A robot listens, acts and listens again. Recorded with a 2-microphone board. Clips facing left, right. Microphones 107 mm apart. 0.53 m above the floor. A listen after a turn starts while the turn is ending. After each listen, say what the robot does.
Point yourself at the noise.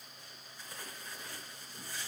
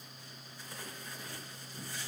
Keep listening.
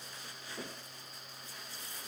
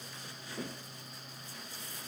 Keep listening.
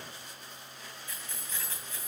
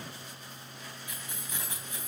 Turn 15° right.
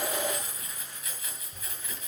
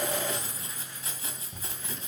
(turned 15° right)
Turn 150° right.
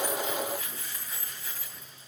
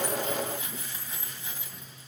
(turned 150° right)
Turn 20° right.
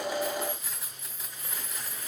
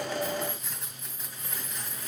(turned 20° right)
Found it: keys jangling, straight ahead, 2 to 4 m away.